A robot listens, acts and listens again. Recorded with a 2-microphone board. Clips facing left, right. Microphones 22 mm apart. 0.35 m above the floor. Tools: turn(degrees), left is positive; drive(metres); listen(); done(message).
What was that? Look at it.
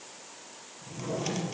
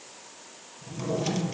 turn(degrees=-30)
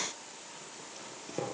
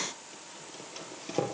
turn(degrees=-145)
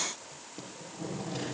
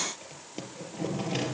turn(degrees=-60)
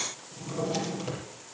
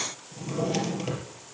turn(degrees=-25)
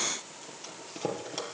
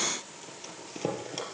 done("Facing the drawer.")